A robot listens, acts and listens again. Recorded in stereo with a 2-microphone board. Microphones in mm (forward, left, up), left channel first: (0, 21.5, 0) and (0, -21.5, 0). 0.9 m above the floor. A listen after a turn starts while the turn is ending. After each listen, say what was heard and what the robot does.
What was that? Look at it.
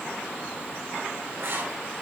The writing: about 60° right or 120° right. Turn 60° right.
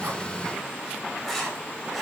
Found it: writing, straight ahead, 2 to 4 m away.